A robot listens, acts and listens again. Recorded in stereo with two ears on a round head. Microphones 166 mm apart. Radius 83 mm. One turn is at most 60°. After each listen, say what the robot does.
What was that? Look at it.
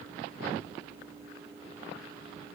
Keep listening.
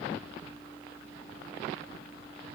Keep listening.
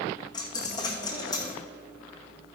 Turn 20° left.
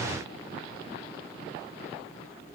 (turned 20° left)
Keep listening.
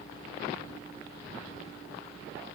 I heard a dropped coin, but can't make it out now. It was about straight ahead or 140° left.